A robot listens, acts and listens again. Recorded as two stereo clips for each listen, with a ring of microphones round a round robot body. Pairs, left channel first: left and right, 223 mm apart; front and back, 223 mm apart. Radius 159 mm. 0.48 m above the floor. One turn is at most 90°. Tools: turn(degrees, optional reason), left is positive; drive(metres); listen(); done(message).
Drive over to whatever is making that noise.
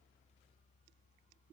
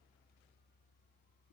listen()
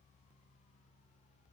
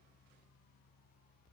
listen()
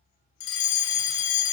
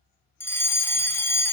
turn(degrees=80, reason="The fire alarm: 80° left.")
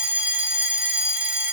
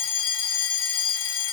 drive(metres=1.0)
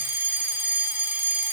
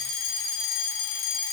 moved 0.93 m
turn(degrees=-10, reason="The fire alarm is now 10° right.")
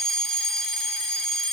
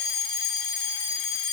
drive(metres=1.0)
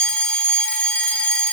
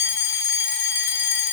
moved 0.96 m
drive(metres=1.0)
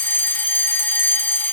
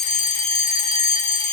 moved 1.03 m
turn(degrees=15, reason="The fire alarm is now 15° left.")
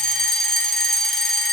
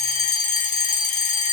drive(metres=1.0)
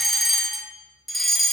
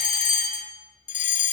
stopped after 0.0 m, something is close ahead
done("Arrived at the fire alarm, straight ahead.")